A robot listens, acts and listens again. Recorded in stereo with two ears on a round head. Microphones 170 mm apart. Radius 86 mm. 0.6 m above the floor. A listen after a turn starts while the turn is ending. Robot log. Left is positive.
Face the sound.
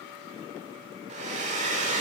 note: The hair dryer: about 40° right or 140° right.
cmd yaw -40
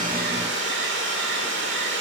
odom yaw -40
note: So it is at 100° right.
cmd yaw -100
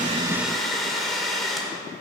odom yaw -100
end: Facing the hair dryer, 1 to 2 m away.